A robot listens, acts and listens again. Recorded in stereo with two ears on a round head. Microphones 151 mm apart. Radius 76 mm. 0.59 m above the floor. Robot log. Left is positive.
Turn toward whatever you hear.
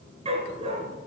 note: The dog barking: about 35° right or 145° right.
cmd yaw -35
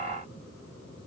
cmd idle
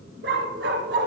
note: So it is at 105° right.
cmd yaw -105
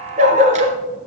note: The dog barking is now 45° right.
cmd yaw -45
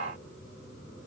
cmd idle
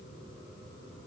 cmd idle
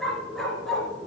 end: Facing the dog barking.